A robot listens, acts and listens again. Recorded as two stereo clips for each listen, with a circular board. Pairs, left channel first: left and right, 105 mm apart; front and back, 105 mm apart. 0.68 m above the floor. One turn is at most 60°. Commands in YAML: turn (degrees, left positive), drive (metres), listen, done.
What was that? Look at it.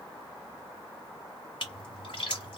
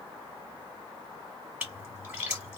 turn: 60
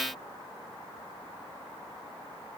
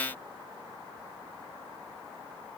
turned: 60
turn: 45
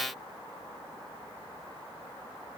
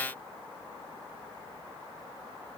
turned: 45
done: "Facing where the splash came from. I can't hear it now."